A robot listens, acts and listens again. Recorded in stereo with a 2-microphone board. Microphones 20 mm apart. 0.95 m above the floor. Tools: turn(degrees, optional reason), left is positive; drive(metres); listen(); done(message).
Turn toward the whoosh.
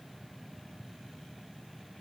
listen()
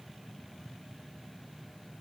listen()
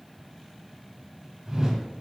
turn(degrees=-40, reason="The whoosh: about 40° right or 140° right.")
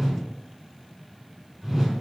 turn(degrees=-10, reason="So it is at 10° right.")
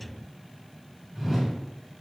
done("Found it: a whoosh, straight ahead, 1 to 2 m away.")